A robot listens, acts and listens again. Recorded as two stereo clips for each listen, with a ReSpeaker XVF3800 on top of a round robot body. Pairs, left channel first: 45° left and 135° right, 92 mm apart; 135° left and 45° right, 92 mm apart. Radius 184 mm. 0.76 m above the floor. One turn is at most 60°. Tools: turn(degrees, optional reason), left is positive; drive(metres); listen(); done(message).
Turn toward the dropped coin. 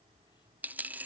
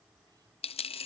turn(degrees=60, reason="The dropped coin: 150° left.")
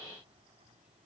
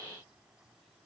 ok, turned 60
turn(degrees=60, reason="Nothing new. It was at 90° left.")
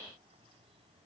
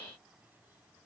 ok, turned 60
turn(degrees=30, reason="Nothing new. It was at 30° left.")
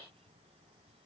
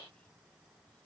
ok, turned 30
done("Facing where the dropped coin came from. I can't hear it now.")